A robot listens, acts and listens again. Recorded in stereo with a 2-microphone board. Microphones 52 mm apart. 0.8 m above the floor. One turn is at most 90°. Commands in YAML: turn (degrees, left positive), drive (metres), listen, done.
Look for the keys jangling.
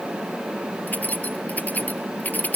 turn: 35
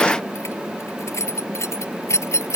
turn: 90
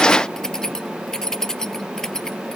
turn: 10
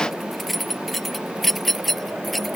done: "Facing the keys jangling."